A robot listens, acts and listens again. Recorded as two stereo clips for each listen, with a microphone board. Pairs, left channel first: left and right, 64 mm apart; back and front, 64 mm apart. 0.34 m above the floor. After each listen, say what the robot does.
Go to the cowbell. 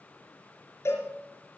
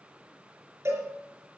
Turn 45° left.
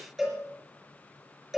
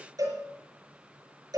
Drive 1.0 m forward.
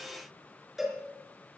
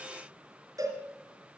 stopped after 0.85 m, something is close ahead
Blocked. The cowbell is further on, straight ahead.